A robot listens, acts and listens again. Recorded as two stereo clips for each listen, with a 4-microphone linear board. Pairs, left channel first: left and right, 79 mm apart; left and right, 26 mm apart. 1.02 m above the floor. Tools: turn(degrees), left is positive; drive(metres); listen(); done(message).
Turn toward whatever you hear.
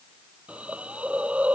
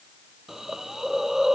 turn(degrees=-15)
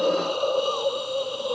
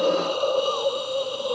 done("Found it: a hiss, straight ahead.")